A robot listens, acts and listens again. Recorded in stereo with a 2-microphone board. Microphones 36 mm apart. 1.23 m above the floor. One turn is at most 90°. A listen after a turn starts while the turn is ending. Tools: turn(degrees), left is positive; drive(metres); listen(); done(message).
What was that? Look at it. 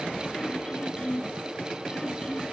turn(degrees=25)
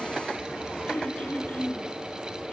turn(degrees=90)
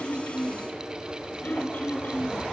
turn(degrees=50)
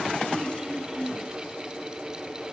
turn(degrees=-15)
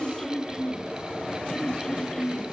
done("Found it: throat clearing, straight ahead.")